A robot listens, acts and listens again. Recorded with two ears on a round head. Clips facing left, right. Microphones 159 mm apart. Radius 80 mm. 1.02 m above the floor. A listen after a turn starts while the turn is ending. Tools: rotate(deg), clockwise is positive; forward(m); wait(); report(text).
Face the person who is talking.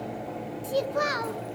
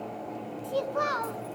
rotate(-20)
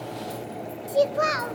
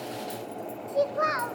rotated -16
rotate(-140)
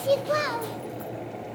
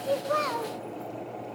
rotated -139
report("Facing the child speaking.")